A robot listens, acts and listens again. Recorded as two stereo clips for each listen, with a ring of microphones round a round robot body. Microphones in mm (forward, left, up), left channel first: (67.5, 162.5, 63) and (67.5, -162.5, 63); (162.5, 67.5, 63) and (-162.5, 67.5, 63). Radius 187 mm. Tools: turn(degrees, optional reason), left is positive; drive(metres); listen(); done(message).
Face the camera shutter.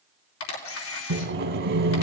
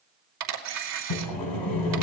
turn(degrees=140, reason="The camera shutter: 140° left.")
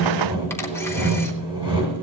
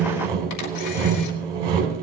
listen()
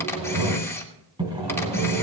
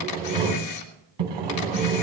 turn(degrees=10, reason="The camera shutter is now 10° left.")
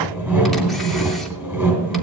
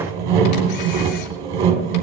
listen()
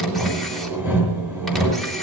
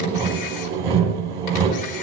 listen()
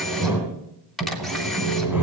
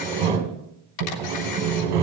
done("Facing the camera shutter.")